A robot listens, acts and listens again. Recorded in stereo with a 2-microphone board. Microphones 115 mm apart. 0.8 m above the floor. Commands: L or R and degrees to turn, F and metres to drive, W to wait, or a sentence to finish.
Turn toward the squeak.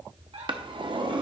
R65
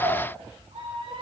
R55
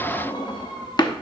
R30
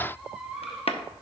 Facing the squeak, 1 to 2 m away.